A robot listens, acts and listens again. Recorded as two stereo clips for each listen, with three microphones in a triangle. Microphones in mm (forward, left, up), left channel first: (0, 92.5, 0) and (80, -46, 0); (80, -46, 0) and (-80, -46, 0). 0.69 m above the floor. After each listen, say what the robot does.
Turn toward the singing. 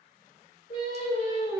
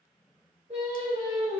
Turn 140° left.
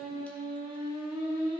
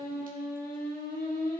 Facing the singing, over 4 m away.